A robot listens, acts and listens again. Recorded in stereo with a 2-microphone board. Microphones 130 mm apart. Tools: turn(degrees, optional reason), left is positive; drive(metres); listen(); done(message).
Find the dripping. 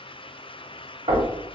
listen()
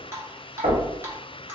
turn(degrees=-20, reason="The dripping: about 20° right or 160° right.")
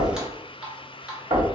done("Facing the dripping, under 1 m away.")